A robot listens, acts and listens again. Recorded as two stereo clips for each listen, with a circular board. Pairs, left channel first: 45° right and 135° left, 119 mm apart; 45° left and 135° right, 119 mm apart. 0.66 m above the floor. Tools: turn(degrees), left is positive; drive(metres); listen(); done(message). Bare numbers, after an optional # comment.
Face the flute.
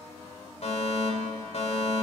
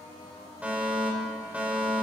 listen()
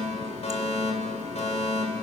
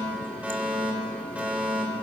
listen()
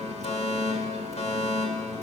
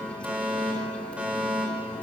done("I can't make out a flute, only a running tap and a fire alarm.")